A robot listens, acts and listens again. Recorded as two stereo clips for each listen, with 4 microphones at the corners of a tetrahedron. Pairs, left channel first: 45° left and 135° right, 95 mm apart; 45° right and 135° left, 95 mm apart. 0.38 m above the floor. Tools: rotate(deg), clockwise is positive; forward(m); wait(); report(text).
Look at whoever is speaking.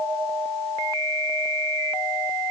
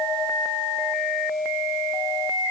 wait()
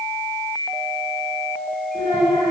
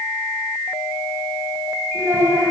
rotate(-75)
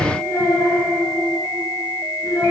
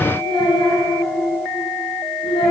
rotate(10)
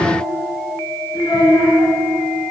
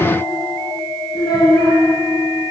report("Found it: a child speaking, straight ahead.")